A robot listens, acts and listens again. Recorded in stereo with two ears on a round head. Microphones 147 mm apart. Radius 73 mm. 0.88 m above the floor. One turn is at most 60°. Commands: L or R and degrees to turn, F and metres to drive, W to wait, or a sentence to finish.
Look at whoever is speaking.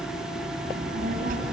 R50
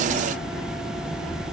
L15
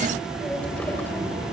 L15
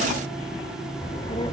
L30
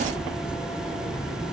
L15
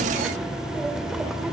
Found it: a child speaking, straight ahead, 1 to 2 m away.